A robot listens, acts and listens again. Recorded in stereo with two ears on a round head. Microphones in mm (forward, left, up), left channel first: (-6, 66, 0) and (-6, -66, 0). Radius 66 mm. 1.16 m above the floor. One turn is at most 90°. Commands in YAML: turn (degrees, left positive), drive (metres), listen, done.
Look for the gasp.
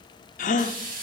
turn: 55
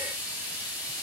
listen: true
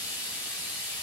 done: "I heard a gasp, but can't make it out now. It was about straight ahead or 70° left."